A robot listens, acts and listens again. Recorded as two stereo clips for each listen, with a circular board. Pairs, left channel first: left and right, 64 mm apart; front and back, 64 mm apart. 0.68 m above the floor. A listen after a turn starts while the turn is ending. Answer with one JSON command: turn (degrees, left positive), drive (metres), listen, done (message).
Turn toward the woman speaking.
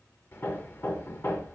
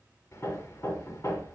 {"listen": true}
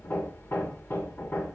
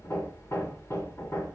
{"listen": true}
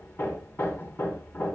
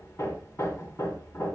{"done": "I can't make out a woman speaking to turn to."}